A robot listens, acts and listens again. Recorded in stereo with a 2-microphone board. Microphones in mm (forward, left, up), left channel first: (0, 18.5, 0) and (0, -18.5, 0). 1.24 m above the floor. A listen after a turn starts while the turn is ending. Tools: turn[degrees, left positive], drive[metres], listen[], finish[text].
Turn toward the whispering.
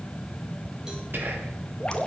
Thought: The whispering: about 70° right or 110° right.
Action: turn[-70]
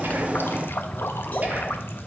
Action: listen[]
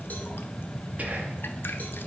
Thought: So it is at 45° right.
Action: turn[-45]
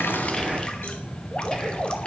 Action: listen[]
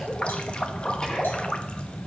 Action: listen[]
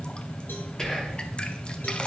Thought: The whispering is now 15° left.
Action: turn[15]
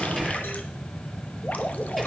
Action: listen[]
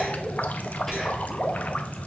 Action: listen[]
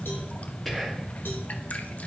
Action: finish[Facing the whispering.]